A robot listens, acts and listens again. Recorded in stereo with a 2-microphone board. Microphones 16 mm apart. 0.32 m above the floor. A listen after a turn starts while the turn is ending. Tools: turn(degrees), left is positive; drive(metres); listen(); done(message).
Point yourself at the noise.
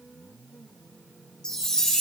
turn(degrees=45)
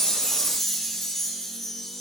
done("Found it: a chime, straight ahead.")